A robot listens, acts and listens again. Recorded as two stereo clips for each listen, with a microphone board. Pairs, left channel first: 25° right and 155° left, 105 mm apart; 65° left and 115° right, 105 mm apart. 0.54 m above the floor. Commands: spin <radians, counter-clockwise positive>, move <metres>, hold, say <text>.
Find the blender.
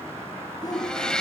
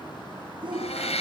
spin 1.05
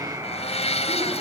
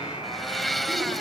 spin -0.35
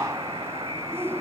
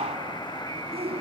hold
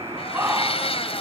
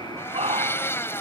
say Found it: a blender, straight ahead.